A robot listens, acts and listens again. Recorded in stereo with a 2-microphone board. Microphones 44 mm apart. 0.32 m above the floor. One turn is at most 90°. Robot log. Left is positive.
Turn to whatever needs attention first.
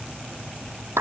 cmd idle
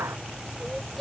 cmd yaw +30
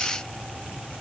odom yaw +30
cmd idle
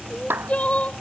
note: So it is at 150° left.
cmd yaw +90
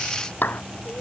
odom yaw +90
note: The crying is now 40° left.
cmd yaw +40
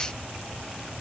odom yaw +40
cmd idle
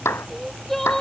end: Found it: crying, straight ahead.